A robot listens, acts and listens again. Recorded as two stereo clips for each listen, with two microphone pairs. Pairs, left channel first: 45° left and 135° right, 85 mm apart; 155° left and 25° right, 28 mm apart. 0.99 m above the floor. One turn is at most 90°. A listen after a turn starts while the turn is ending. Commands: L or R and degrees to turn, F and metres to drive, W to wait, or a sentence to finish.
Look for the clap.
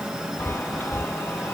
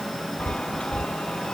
W
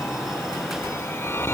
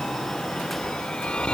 W
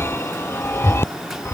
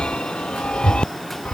I can't make out a clap to turn to.